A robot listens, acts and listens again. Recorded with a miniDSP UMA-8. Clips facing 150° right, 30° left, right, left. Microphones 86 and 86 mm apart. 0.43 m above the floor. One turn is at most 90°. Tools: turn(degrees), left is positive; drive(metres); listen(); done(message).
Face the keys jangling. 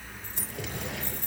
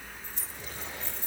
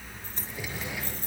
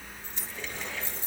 turn(degrees=-90)
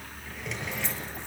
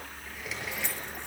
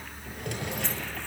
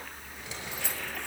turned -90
turn(degrees=15)
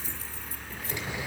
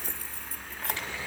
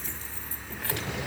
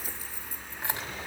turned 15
turn(degrees=20)
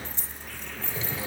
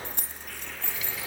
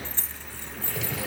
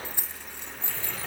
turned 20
turn(degrees=25)
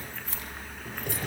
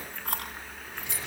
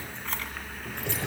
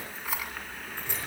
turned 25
turn(degrees=10)
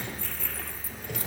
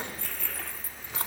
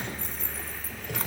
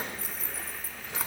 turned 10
done("Found it: keys jangling, straight ahead, 2 to 4 m away.")